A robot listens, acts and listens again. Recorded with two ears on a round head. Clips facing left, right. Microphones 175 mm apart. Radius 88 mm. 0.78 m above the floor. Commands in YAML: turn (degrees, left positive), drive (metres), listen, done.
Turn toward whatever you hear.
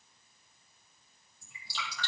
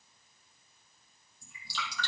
turn: -90
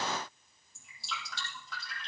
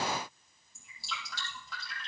done: "Facing the dripping."